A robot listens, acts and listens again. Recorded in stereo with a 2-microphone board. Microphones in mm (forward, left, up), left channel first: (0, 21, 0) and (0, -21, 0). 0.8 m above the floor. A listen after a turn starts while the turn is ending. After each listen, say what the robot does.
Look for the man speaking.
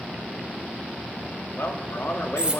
Turn 70° left.
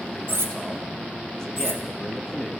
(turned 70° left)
Turn 15° left.
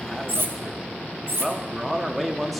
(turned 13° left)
Found it: a man speaking, straight ahead.